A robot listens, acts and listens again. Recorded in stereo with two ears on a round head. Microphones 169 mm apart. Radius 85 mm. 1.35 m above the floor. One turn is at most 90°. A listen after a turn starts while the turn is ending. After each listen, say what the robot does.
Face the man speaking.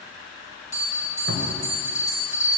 Keep listening.
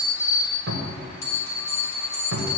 Keep listening.
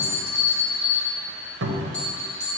I can't make out a man speaking to turn to.